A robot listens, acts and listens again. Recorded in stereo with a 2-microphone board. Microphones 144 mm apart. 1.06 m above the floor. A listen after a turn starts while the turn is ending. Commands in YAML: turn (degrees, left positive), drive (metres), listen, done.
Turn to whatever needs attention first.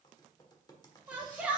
turn: -30
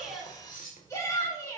turn: 20
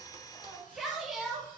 done: "Facing the shout."